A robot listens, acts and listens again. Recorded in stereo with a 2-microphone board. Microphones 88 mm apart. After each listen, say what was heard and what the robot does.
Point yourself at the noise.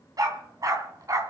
The dog barking: about 40° right or 140° right. Turn 40° right.
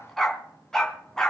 So it is at 10° left. Turn 10° left.
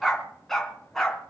Facing the dog barking, 2 to 4 m away.